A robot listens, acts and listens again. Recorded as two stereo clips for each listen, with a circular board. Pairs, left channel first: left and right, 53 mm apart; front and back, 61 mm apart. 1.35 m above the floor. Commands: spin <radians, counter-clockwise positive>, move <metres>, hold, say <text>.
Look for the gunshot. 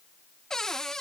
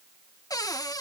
hold
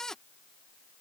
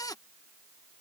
hold
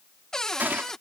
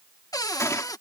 spin -0.61
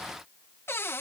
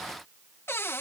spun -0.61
say I heard a gunshot from this way, but can't make it out now.